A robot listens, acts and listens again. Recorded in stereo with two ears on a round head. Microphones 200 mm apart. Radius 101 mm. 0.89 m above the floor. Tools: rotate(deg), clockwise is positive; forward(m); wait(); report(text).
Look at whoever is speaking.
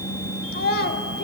rotate(-45)
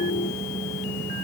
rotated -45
wait()
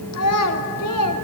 rotate(-85)
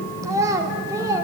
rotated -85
rotate(15)
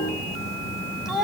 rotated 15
report("Facing the child speaking, 1 to 2 m away.")